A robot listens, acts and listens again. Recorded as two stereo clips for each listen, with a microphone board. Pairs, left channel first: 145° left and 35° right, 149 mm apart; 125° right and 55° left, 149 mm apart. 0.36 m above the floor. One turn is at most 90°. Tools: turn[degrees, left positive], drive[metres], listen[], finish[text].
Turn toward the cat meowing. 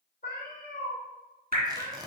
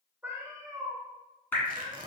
Thought: The cat meowing: 115° left.
Action: turn[90]
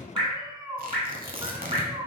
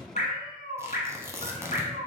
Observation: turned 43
Thought: The cat meowing is now 30° left.
Action: turn[30]
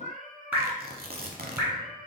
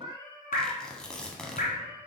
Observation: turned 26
Thought: The cat meowing is now 20° right.
Action: turn[-20]
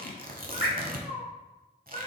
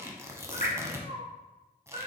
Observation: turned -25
Action: finish[Facing the cat meowing, 2 to 4 m away.]